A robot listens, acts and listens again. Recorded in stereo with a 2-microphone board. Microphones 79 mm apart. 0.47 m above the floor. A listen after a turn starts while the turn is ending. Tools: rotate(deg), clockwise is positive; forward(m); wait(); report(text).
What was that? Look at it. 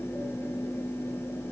wait()
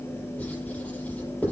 rotate(-20)
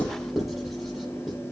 report("Facing the writing.")